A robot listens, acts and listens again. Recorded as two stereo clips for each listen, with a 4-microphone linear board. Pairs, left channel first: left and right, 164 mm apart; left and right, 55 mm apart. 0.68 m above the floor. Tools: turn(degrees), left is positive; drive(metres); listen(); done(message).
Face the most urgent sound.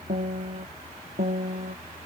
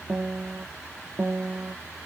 listen()
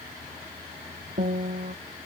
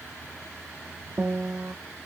listen()
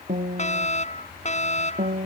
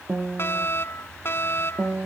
turn(degrees=45)
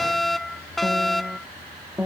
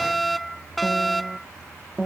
done("Found it: a fire alarm, straight ahead.")